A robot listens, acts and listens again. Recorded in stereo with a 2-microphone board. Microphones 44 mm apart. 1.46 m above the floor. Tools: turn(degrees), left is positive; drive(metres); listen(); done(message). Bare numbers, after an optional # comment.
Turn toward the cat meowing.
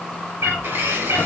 # The cat meowing: about 70° right or 110° right.
turn(-70)
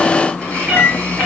# So it is at 15° right.
turn(-15)
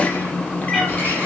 listen()
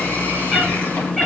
done("Found it: a cat meowing, straight ahead, over 4 m away.")